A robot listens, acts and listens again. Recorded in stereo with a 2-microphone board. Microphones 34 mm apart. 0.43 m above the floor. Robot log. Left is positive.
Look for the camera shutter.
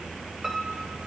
cmd idle
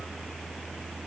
cmd idle
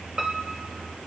end: I can't make out a camera shutter, only a piano.